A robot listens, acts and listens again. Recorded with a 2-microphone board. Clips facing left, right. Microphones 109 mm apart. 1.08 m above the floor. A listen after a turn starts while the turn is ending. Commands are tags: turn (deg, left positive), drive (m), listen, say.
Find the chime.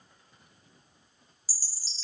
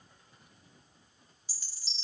<turn deg="35"/>
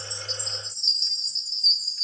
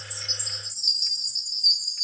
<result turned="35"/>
<say>Facing the chime, under 1 m away.</say>